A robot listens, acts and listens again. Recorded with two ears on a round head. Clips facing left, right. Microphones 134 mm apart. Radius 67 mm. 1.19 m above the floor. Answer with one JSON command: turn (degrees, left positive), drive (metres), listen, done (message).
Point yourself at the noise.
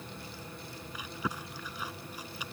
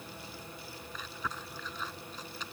{"turn": 30}
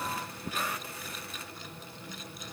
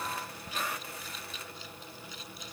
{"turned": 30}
{"turn": 135}
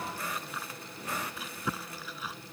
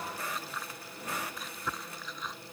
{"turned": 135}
{"done": "Facing the chewing."}